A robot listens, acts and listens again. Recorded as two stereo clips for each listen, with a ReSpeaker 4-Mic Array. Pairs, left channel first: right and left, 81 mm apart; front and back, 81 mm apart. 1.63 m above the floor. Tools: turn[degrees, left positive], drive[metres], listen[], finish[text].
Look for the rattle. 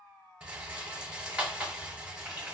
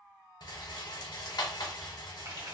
Thought: The rattle: 15° left.
Action: turn[15]
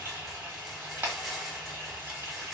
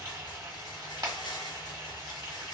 Action: finish[Found it: a rattle, straight ahead.]